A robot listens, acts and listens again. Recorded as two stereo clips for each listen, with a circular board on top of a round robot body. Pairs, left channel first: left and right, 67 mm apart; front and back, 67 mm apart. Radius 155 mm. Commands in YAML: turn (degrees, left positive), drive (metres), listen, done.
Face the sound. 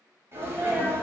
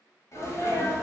turn: -40
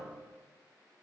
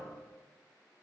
done: "I heard a sneeze from this way, but can't make it out now."